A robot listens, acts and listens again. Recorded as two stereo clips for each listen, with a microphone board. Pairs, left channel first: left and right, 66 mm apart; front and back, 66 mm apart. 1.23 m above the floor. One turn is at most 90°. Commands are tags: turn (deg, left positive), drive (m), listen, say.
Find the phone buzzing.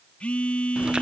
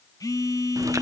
<turn deg="20"/>
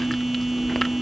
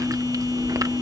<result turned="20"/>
<say>Facing the phone buzzing.</say>